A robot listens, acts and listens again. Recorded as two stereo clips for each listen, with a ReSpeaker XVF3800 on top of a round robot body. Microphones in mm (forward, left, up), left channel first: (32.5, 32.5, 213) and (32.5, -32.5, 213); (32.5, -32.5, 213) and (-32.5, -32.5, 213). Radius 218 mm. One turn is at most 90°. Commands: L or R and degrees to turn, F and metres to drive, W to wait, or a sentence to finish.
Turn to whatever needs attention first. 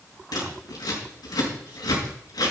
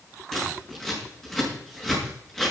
W
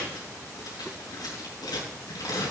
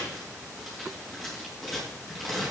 W
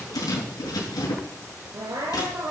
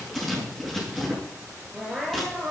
R90
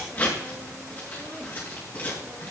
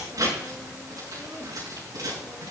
W
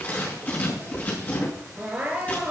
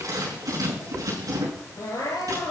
R20
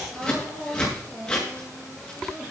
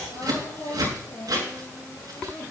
R10
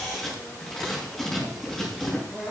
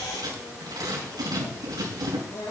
Found it: crying, straight ahead.